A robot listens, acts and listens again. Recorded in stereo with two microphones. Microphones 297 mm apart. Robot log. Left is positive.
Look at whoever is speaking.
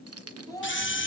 cmd yaw +30
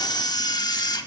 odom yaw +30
cmd idle
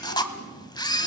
cmd idle
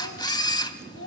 note: So it is at 135° left.
cmd yaw +135
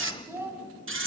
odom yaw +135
note: The child speaking is now 10° right.
cmd yaw -10
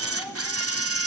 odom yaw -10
cmd idle
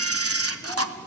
cmd idle
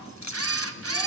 end: I heard a child speaking from this way, but can't make it out now.